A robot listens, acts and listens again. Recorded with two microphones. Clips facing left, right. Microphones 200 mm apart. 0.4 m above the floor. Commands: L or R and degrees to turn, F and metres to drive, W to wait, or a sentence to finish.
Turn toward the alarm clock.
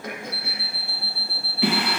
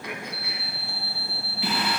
R40
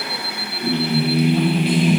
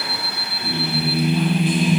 Facing the alarm clock, under 1 m away.